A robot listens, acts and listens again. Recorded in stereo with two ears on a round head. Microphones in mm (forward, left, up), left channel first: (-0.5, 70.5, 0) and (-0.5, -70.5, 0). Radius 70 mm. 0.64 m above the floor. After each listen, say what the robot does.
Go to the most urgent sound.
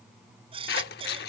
Turn 35° right.
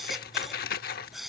Drive 1.0 m forward.
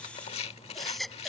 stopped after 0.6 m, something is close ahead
Blocked. The baby crying is further on, straight ahead.